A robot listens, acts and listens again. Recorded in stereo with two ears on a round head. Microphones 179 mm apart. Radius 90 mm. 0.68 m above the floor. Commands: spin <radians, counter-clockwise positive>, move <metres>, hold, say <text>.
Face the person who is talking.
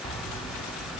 hold
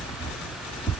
hold
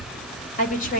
spin 0.79
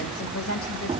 spin 1.83
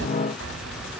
hold
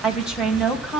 say Facing the woman speaking, over 4 m away.